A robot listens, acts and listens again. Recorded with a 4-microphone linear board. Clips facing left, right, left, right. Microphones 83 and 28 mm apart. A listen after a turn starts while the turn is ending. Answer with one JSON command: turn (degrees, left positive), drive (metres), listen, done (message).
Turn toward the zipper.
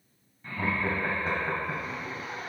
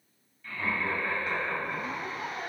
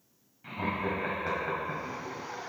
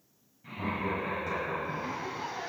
{"turn": -60}
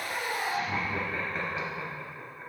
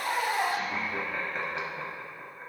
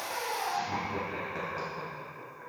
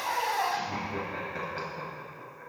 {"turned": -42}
{"turn": -75}
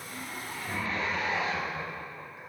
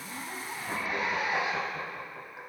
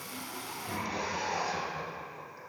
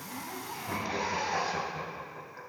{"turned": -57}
{"turn": -15}
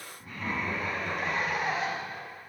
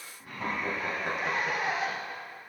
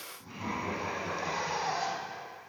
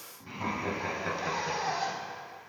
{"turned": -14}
{"done": "Found it: a zipper, straight ahead."}